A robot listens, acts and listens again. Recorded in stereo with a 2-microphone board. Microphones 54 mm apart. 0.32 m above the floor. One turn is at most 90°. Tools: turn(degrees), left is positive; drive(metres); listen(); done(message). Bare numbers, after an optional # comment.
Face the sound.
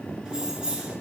# The keys jangling: about 15° right or 165° right.
turn(-15)
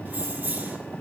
# The keys jangling: about 30° right or 150° right.
turn(-30)
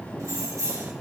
# So it is at 110° right.
turn(-90)
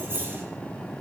# The keys jangling is now 45° right.
turn(-45)
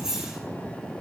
# The keys jangling is now 10° right.
turn(-10)
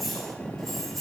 done("Found it: keys jangling, straight ahead.")